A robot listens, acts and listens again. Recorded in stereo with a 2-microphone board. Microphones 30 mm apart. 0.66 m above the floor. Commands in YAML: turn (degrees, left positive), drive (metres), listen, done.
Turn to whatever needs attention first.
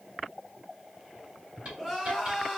turn: -30
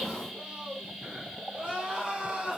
turn: -145
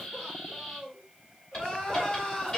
turn: 25
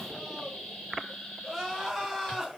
done: "Found it: crying, straight ahead, 1 to 2 m away."